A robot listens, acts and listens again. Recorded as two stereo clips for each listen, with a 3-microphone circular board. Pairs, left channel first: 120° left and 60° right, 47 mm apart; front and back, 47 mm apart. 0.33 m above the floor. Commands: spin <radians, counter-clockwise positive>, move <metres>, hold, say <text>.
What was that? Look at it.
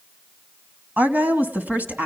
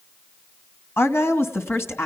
spin -0.17
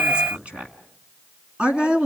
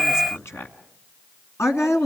say Facing the woman speaking.